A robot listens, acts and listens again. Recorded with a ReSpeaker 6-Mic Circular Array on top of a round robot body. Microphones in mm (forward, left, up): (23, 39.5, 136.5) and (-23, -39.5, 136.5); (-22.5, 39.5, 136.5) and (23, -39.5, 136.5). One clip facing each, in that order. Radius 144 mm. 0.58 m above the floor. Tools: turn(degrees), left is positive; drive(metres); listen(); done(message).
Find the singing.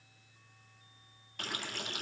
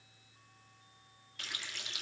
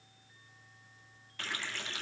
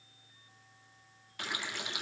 listen()
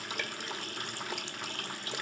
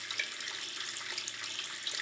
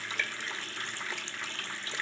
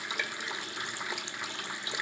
listen()
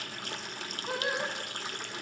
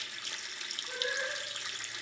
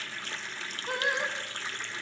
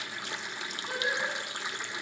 turn(degrees=75)
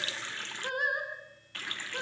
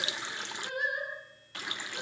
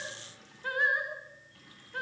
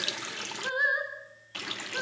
turn(degrees=15)
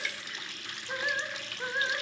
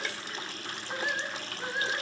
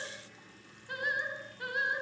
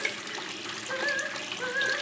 done("Facing the singing, over 4 m away.")